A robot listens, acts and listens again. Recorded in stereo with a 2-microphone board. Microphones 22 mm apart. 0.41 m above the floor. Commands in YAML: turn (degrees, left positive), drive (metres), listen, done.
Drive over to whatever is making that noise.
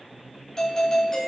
turn: 35
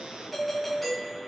drive: 1.0
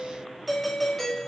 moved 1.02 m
turn: 10
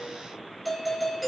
drive: 1.0
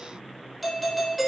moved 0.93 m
drive: 1.0
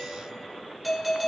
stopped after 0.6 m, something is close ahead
done: "I am next to the doorbell."